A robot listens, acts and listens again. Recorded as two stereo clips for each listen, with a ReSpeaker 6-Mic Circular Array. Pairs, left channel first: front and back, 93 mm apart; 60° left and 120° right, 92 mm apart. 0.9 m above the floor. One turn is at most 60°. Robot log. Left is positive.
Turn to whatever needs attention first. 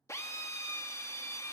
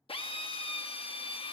cmd idle
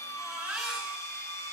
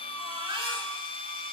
note: The baby crying: 100° right.
cmd yaw -60
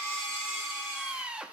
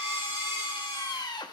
note: The baby crying is now 55° right.
cmd yaw -55
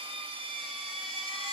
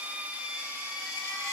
note: The baby crying is now 10° left.
cmd yaw +10
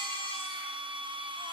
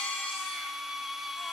cmd idle
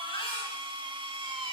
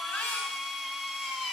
end: Found it: a baby crying, straight ahead, over 4 m away.